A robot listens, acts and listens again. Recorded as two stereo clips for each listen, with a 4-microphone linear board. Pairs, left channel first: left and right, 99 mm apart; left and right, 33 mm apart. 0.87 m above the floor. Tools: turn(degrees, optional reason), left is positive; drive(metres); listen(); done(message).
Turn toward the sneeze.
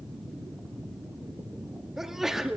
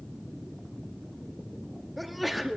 turn(degrees=-30)
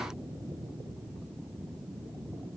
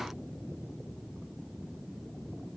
listen()
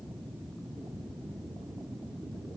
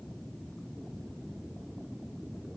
done("I heard a sneeze, but can't make it out now. It was about 25° left or 145° right.")